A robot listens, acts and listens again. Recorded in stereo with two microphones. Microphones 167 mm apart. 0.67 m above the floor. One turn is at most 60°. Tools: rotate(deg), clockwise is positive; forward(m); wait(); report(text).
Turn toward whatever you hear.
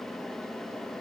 wait()
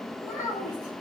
rotate(30)
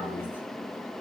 wait()
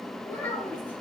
rotate(-10)
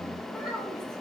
report("Found it: a child speaking, straight ahead, over 4 m away.")